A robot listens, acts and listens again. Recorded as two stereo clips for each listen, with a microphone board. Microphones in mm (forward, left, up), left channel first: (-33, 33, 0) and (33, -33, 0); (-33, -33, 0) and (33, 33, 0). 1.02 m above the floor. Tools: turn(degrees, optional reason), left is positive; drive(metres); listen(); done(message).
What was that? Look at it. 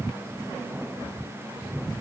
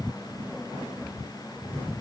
listen()
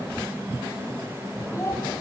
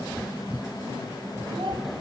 listen()
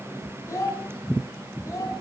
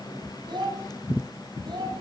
turn(degrees=80, reason="The child speaking: 80° left.")
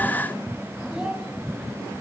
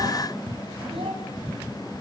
listen()
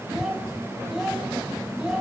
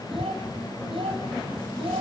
turn(degrees=40, reason="The child speaking is now 40° left.")
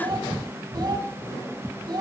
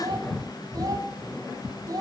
done("Found it: a child speaking, straight ahead, over 4 m away.")